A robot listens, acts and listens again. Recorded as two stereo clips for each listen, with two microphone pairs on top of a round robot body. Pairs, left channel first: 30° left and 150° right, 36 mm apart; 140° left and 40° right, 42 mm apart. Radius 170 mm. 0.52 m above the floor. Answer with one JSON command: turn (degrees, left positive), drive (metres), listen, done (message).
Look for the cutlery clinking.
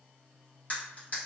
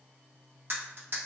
{"turn": -20}
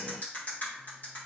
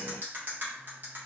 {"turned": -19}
{"done": "Found it: cutlery clinking, straight ahead, 1 to 2 m away."}